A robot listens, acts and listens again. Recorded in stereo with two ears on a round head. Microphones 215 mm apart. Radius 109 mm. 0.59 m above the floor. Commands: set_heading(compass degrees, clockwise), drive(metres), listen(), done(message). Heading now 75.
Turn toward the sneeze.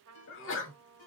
set_heading(20)
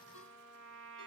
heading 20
listen()
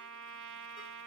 done("I heard a sneeze, but can't make it out now. It was about straight ahead or 70° left.")